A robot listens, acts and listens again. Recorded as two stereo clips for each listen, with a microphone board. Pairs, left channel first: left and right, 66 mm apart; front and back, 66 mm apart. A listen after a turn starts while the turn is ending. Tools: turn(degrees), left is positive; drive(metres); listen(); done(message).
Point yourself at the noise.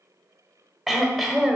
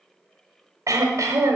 turn(degrees=180)
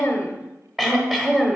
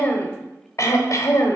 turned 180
done("Found it: throat clearing, straight ahead.")